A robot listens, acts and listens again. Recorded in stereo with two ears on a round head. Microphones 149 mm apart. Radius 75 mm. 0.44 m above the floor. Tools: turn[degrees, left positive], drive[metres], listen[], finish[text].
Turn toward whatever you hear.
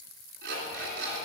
Thought: The alarm clock: about 65° right or 115° right.
Action: turn[-65]
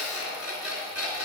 Action: finish[Facing the alarm clock.]